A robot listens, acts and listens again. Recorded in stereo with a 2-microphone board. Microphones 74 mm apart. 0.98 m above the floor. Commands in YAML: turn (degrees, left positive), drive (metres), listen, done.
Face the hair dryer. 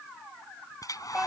turn: 55
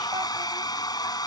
turn: 70
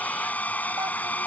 turn: 20
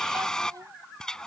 turn: 10
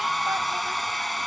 done: "Facing the hair dryer."